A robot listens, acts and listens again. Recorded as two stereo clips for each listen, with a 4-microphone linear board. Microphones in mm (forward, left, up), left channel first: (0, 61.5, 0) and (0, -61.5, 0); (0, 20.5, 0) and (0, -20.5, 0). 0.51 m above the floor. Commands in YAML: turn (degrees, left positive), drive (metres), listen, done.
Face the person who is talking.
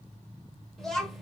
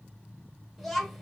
turn: 30
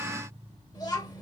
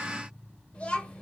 turn: 145
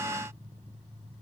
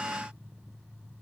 listen: true
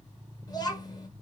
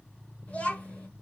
turn: 35
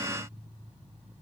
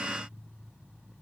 listen: true
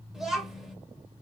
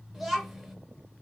done: "Facing the child speaking, 1 to 2 m away."